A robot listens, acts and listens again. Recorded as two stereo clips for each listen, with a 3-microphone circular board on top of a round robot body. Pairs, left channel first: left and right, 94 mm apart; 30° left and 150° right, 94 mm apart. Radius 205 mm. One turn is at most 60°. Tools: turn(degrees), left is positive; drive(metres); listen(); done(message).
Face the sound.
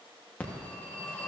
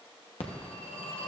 turn(degrees=15)
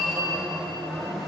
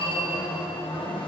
done("Found it: a phone ringing, straight ahead, 1 to 2 m away.")